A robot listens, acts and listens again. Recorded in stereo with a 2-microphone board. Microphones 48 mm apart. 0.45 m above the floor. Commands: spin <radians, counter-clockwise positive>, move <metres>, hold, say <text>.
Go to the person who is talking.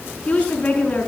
spin 0.61
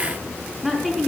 move 1.0
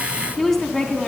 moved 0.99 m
move 1.0
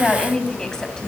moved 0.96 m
spin 0.26
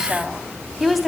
move 1.0
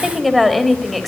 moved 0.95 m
move 1.0
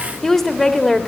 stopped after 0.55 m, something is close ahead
spin 0.17
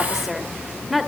say I am next to the woman speaking.